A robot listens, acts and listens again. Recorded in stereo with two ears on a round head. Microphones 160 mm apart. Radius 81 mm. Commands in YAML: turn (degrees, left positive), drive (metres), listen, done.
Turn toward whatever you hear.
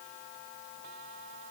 listen: true
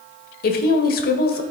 turn: 55
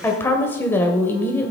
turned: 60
turn: 15
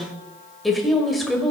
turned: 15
done: "Facing the woman speaking."